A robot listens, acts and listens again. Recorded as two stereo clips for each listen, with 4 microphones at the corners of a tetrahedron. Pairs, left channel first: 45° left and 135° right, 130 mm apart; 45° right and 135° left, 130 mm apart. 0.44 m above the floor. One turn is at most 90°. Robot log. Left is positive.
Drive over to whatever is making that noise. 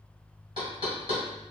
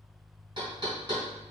note: The knocking: straight behind.
cmd yaw +90
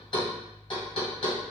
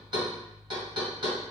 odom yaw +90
note: The knocking is now 85° left.
cmd yaw +85
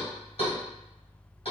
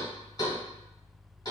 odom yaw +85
note: The knocking is now 10° left.
cmd yaw +10
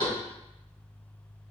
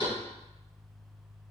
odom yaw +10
cmd fwd 1.0
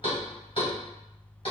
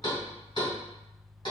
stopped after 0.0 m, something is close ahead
end: Something is in my way. I am facing the knocking but have not reached it.